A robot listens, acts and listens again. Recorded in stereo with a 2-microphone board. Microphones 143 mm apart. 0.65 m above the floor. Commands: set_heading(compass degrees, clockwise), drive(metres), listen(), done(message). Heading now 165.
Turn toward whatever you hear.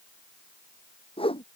set_heading(125)
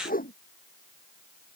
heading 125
set_heading(25)
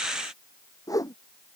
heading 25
set_heading(0)
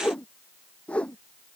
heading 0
set_heading(350)
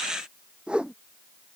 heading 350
done("Found it: a whoosh, straight ahead.")